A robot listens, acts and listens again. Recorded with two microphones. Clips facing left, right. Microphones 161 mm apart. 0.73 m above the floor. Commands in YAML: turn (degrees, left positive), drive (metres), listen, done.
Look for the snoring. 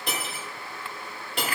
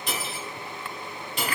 listen: true
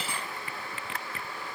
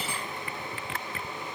listen: true
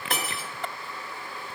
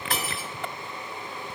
done: "I can't make out snoring, only cutlery clinking."